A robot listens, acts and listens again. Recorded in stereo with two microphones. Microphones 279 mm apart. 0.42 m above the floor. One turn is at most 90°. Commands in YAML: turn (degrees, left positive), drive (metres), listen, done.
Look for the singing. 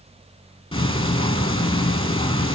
listen: true
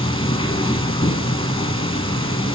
listen: true
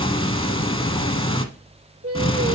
turn: -55
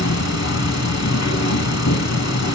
listen: true
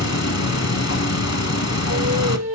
turn: -70
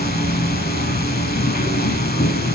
listen: true
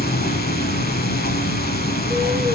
listen: true
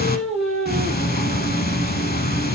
done: "Facing the singing."